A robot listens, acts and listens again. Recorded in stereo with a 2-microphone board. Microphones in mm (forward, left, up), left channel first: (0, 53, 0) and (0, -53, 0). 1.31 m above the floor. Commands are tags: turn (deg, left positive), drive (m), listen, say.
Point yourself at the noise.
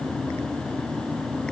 <listen/>
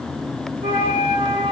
<turn deg="-60"/>
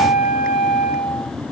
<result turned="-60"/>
<say>Facing the flute, 1 to 2 m away.</say>